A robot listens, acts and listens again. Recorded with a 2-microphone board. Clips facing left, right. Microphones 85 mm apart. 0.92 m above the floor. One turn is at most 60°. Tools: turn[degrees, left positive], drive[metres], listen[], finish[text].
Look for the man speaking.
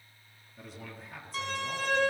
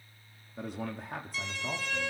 Thought: The man speaking: about 50° right or 130° right.
Action: turn[-50]
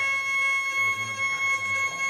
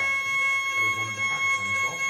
Action: listen[]
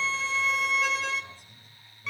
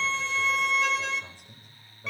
Thought: So it is at 75° right.
Action: turn[-60]
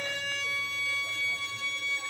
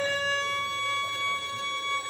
Thought: Nothing new. It was at 15° right.
Action: turn[-15]
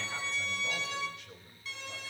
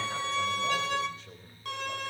Thought: The man speaking is now 35° right.
Action: turn[-35]
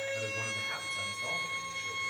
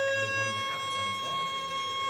Action: listen[]
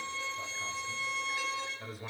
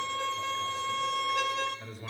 Action: finish[Facing the man speaking, over 4 m away.]